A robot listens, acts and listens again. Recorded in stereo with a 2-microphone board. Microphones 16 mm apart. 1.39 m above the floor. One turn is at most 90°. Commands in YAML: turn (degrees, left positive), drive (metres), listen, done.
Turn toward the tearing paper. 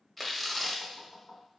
turn: 30
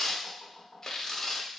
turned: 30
turn: 90
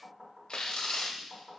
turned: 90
turn: 75
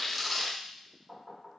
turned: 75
done: "Facing the tearing paper."